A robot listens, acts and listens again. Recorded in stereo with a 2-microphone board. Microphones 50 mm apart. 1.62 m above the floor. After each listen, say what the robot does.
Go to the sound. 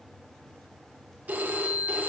Turn 30° right.
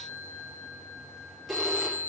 Drive 1.0 m forward.
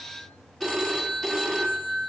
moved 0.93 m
Turn 10° left.
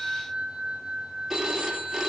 Drive 1.0 m forward.
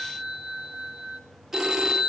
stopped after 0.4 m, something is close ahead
I am next to the phone ringing.